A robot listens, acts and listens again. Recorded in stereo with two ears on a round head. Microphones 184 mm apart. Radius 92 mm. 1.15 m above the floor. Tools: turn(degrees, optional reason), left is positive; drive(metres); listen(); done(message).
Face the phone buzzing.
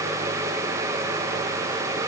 listen()
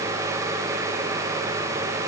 listen()
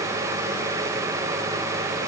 done("I can't make out a phone buzzing.")